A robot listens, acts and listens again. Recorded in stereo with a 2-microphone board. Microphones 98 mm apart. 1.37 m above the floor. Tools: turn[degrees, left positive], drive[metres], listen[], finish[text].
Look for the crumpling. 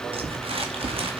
Thought: The crumpling: about 75° right or 105° right.
Action: turn[-75]
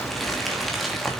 Action: finish[Found it: crumpling, straight ahead.]